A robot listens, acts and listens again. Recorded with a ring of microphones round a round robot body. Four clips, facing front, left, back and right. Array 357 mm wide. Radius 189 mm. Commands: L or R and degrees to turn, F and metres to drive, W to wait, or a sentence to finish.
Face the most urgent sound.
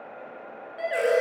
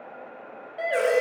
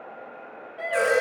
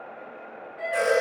L80
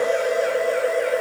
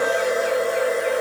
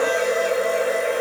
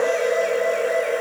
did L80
W
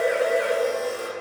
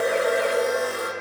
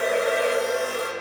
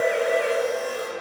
W
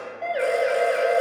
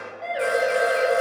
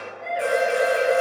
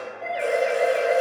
L10
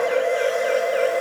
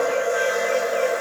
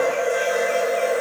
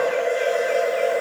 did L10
W
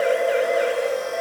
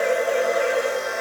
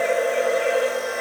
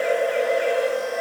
W
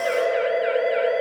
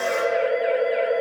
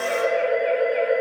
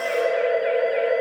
Facing the siren, over 4 m away.